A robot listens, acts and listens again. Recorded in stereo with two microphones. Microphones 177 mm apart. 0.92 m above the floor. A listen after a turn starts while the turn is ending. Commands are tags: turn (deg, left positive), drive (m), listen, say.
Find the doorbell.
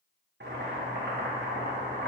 <listen/>
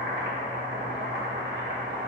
<listen/>
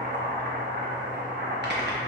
<say>I can't make out a doorbell to turn to.</say>